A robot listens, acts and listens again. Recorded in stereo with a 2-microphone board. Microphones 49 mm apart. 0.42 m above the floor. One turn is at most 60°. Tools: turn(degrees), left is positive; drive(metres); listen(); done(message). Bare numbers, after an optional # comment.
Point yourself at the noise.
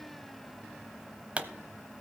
# The pop: about 25° right or 155° right.
turn(-25)
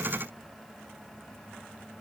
listen()
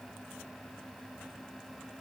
done("I heard a pop, but can't make it out now. It was about straight ahead or 130° right.")